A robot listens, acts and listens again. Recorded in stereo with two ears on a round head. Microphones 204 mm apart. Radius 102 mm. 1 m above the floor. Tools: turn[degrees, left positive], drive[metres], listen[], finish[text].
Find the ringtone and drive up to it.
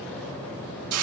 Action: listen[]
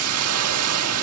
Action: listen[]
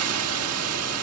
Action: finish[I can't make out a ringtone to turn to.]